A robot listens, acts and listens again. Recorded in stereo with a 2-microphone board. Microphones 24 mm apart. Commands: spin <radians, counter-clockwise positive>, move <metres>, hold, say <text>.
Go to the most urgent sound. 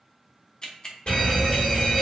spin 0.87
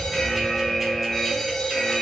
spin 0.35
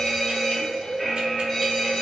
move 1.0
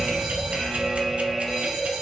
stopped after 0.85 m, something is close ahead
spin -0.26
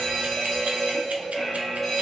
say Arrived at the fire alarm, straight ahead.